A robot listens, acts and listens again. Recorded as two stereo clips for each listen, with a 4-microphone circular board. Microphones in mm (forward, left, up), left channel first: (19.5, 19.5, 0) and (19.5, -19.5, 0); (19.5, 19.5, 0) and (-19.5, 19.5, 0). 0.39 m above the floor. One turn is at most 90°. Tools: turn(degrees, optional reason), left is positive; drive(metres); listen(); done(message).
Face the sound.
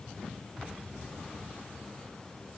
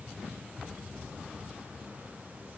listen()
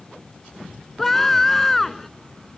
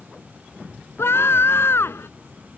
done("Facing the scream.")